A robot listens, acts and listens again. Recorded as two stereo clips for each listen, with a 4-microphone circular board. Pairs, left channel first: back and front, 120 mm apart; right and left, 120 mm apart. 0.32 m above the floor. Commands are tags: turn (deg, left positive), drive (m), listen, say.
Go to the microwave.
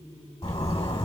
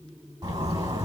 <listen/>
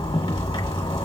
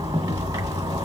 <listen/>
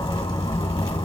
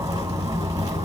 <say>I can't make out a microwave, only a zipper.</say>